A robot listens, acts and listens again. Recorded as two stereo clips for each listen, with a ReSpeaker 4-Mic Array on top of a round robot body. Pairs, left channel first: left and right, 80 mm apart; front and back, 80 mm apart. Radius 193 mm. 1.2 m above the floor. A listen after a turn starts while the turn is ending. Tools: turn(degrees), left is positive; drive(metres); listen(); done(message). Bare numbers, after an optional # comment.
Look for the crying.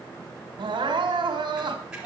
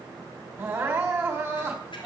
# The crying: 115° right.
turn(-115)
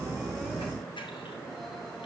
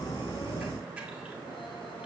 listen()
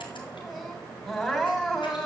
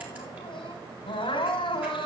done("Found it: crying, straight ahead.")